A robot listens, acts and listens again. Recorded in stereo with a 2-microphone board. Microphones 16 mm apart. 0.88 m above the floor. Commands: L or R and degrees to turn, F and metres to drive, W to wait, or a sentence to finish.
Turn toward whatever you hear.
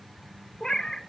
L50
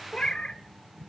L80
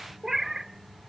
R25
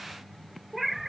R10
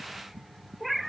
Facing the cat meowing.